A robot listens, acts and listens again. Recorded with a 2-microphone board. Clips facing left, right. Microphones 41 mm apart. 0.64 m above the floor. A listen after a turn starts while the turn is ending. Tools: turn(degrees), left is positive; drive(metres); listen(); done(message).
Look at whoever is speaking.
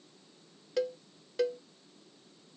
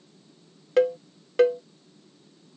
listen()
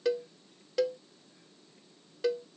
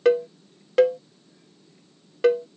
listen()
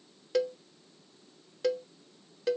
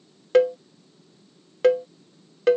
done("I can't make out anyone speaking to turn to.")